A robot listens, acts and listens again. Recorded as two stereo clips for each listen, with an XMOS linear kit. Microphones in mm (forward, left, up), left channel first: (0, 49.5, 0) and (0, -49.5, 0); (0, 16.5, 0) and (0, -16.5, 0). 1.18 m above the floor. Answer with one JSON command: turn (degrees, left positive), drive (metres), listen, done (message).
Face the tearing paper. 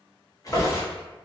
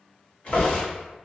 {"turn": 35}
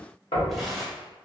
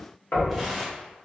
{"done": "Facing the tearing paper, 1 to 2 m away."}